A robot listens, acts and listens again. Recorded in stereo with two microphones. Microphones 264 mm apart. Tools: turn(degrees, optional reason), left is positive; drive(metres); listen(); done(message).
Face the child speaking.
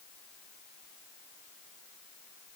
listen()
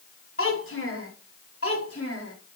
turn(degrees=60, reason="The child speaking: about 60° left or 120° left.")
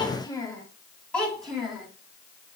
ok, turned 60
done("Facing the child speaking.")